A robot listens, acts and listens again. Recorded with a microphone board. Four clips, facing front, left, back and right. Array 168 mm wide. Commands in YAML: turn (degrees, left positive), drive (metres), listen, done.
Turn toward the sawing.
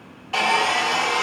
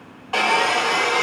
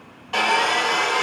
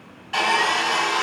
turn: 105
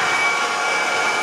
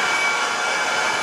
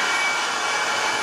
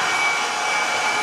turn: 10
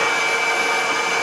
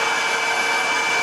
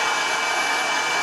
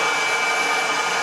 done: "Found it: sawing, straight ahead."